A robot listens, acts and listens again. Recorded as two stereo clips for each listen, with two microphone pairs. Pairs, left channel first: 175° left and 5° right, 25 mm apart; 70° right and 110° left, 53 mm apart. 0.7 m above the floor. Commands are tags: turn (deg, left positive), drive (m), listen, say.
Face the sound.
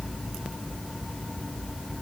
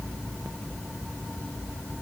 <listen/>
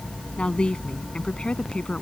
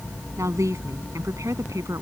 <turn deg="125"/>
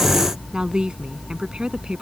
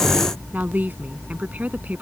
<turn deg="50"/>
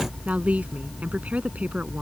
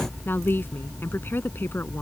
<turn deg="-20"/>
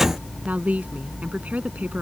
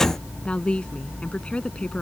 <say>Facing the woman speaking.</say>